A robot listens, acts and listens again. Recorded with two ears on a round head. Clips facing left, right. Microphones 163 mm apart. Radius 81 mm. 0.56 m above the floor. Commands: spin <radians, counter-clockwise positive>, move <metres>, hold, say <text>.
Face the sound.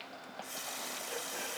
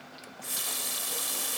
spin -1.22
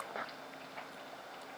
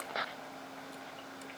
hold
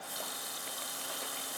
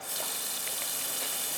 spin -0.52
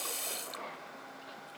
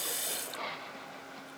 spin -0.17
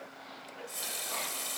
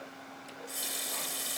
say Facing the running tap.